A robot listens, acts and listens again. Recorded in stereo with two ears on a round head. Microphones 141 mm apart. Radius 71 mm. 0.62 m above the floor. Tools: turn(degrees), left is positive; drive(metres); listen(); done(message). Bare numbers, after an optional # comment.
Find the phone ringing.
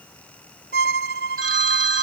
# The phone ringing: about 50° right or 130° right.
turn(-50)
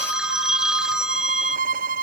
done("Found it: a phone ringing, straight ahead.")